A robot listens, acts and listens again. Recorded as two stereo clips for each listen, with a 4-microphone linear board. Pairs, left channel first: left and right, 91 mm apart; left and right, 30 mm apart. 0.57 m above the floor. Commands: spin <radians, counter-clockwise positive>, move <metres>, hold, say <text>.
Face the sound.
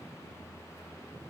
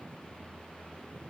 hold
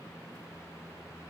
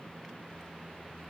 hold
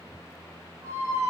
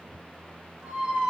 spin -0.61
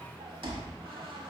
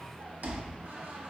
spin -1.83
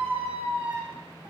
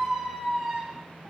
spin -0.35
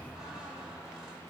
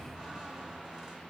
say Facing the squeak.